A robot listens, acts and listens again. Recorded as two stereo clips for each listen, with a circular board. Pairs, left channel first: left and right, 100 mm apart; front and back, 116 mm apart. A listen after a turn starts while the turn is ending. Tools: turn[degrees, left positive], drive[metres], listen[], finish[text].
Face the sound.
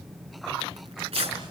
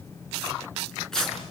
Thought: The tearing paper: 85° right.
Action: turn[-85]
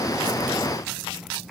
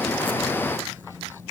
Action: listen[]
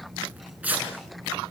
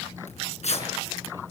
Thought: The tearing paper is now 15° right.
Action: turn[-15]
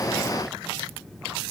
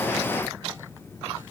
Action: listen[]
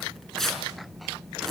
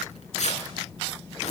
Action: finish[Found it: tearing paper, straight ahead.]